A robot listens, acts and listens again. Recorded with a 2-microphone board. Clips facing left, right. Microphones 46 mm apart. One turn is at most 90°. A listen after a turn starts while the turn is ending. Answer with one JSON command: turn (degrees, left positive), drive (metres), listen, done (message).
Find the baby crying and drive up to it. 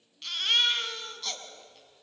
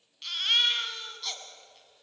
{"turn": 30}
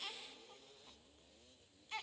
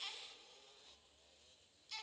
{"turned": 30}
{"turn": 90}
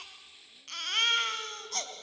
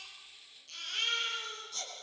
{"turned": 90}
{"turn": 65}
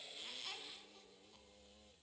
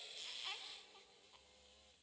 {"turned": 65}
{"listen": true}
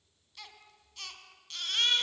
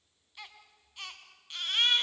{"turn": -20}
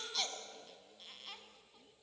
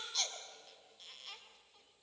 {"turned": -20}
{"drive": 1.0}
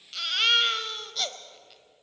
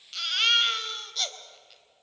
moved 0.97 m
{"drive": 1.0}
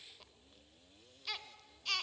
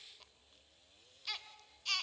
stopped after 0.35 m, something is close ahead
{"done": "I am next to the baby crying."}